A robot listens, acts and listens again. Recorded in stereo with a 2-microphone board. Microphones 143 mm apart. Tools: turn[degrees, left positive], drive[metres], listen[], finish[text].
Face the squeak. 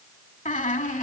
Thought: The squeak: about 65° left or 115° left.
Action: turn[65]
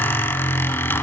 Thought: So it is at 15° left.
Action: turn[15]
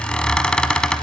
Action: finish[Facing the squeak.]